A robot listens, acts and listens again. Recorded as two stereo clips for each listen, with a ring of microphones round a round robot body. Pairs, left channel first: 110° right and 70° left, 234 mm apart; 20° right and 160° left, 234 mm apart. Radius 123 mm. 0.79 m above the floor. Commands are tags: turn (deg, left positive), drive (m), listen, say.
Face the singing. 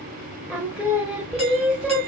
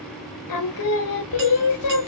<turn deg="-20"/>
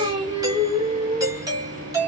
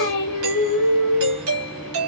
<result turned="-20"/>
<say>Found it: singing, straight ahead.</say>